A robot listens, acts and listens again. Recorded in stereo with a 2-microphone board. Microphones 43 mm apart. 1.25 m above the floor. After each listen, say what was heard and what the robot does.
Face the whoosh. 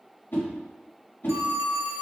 The whoosh: about 55° left or 125° left. Turn 55° left.
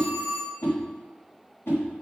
So it is at 65° left. Turn 65° left.
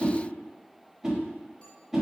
The whoosh is now 10° right. Turn 10° right.
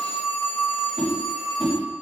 Keep listening.
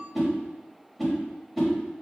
Facing the whoosh, 1 to 2 m away.